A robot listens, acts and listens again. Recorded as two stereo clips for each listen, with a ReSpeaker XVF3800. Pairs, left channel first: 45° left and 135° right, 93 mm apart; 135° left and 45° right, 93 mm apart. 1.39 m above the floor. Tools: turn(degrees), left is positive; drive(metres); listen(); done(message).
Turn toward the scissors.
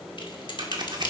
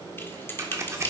turn(degrees=-100)
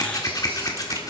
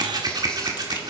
done("Facing the scissors, 1 to 2 m away.")